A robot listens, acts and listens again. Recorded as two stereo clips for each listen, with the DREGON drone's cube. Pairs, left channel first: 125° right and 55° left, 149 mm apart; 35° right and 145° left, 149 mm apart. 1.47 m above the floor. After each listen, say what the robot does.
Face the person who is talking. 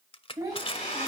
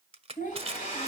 Turn 10° right.
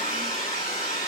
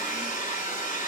Keep listening.
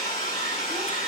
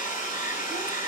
Keep listening.
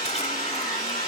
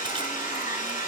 Facing where the child speaking came from. I can't hear it now.